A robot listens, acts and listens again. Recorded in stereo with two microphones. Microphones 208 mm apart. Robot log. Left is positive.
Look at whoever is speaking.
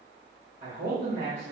note: The man speaking: about 40° right or 140° right.
cmd yaw -40
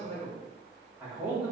note: So it is at 10° right.
cmd yaw -10
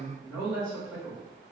end: Facing the man speaking.